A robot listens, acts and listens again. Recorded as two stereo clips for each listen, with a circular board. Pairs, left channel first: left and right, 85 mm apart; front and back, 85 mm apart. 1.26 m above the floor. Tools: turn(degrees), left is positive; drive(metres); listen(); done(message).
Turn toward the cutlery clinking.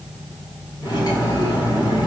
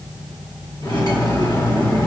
turn(degrees=45)
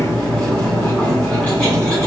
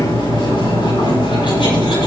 turn(degrees=10)
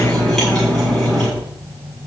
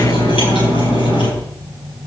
done("Found it: cutlery clinking, straight ahead.")